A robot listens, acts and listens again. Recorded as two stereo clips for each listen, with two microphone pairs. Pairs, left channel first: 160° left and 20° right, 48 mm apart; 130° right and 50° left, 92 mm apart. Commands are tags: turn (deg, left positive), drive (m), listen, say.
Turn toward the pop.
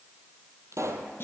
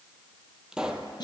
<turn deg="-30"/>
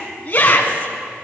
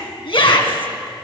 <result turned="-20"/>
<turn deg="-10"/>
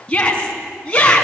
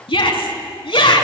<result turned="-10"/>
<say>Facing where the pop came from. I can't hear it now.</say>